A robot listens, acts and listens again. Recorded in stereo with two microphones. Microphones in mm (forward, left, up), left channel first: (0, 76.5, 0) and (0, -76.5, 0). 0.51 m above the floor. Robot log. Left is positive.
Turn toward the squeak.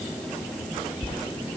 cmd idle
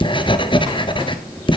cmd idle
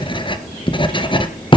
end: I can't make out a squeak, only writing.